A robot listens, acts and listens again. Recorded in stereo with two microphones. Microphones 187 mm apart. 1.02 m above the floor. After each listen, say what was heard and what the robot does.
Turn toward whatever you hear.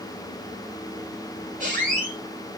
The squeak: about 45° right or 135° right. Turn 45° right.
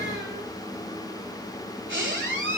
So it is at 90° right. Turn 90° right.
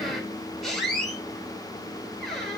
Facing the squeak.